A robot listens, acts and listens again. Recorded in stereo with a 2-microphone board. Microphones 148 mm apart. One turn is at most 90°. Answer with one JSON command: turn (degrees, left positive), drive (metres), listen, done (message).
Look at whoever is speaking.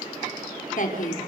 {"turn": 65}
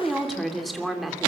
{"done": "Found it: a woman speaking, straight ahead."}